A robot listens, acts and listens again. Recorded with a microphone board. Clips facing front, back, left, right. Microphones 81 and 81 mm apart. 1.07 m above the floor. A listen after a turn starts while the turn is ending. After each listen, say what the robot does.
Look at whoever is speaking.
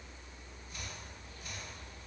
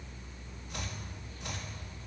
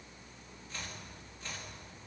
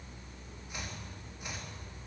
Keep listening.
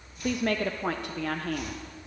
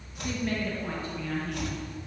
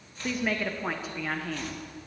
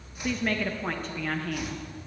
Facing the woman speaking, under 1 m away.